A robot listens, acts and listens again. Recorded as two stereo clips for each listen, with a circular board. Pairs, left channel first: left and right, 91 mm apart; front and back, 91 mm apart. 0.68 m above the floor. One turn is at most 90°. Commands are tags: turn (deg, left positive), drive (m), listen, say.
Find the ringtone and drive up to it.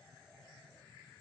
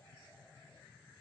<listen/>
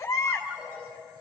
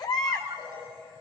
<turn deg="-90"/>
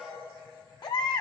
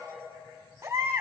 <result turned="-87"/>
<turn deg="-70"/>
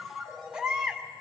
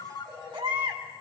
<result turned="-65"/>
<drive m="1.0"/>
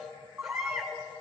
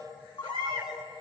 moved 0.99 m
<drive m="1.0"/>
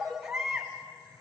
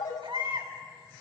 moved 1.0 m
<drive m="1.0"/>
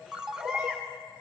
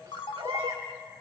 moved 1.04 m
<turn deg="-10"/>
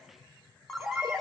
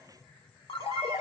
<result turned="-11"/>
<drive m="1.0"/>
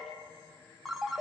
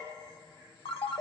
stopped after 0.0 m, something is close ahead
<say>Arrived at the ringtone, straight ahead.</say>